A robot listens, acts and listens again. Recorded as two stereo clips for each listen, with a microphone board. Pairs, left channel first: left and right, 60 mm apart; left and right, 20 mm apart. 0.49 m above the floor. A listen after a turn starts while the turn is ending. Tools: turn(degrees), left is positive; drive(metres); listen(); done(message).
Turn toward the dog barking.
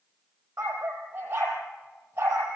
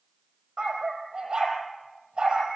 turn(degrees=-35)
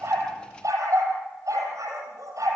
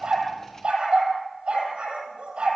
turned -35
turn(degrees=-110)
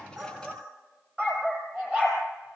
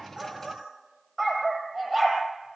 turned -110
turn(degrees=-25)
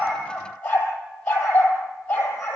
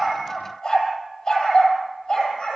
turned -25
turn(degrees=20)
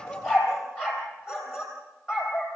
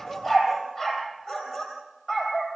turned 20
done("Facing the dog barking, over 4 m away.")